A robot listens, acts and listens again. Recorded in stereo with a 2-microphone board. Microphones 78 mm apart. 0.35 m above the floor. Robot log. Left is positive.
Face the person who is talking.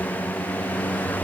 cmd idle
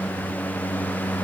cmd idle
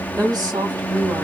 note: The woman speaking: about 60° right or 120° right.
cmd yaw -60
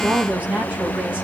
note: So it is at 20° right.
cmd yaw -20
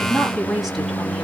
end: Found it: a woman speaking, straight ahead, 1 to 2 m away.